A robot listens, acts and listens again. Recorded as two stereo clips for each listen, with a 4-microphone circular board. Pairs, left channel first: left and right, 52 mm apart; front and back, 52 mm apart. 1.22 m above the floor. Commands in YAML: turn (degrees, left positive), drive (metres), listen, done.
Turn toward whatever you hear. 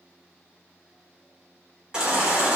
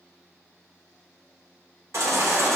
turn: -160
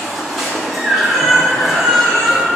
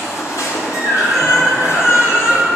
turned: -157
done: "Found it: a baby crying, straight ahead, 2 to 4 m away."